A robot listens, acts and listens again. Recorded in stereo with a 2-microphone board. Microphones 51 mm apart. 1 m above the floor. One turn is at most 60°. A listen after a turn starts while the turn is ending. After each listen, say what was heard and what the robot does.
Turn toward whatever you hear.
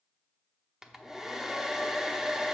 Turn 30° right.
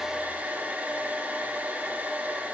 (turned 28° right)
So it is at 140° right. Turn 60° right.
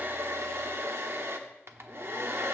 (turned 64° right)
The hair dryer is now 75° right. Turn 60° right.
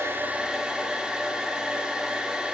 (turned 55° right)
The hair dryer is now 20° right. Turn 20° right.
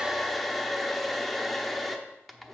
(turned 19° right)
Found it: a hair dryer, straight ahead.